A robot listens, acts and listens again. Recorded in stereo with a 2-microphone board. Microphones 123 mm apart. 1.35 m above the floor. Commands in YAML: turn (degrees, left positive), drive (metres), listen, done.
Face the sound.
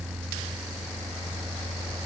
listen: true
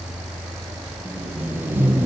turn: -15
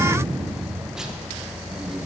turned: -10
listen: true
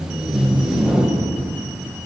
done: "Facing the tape being pulled, under 1 m away."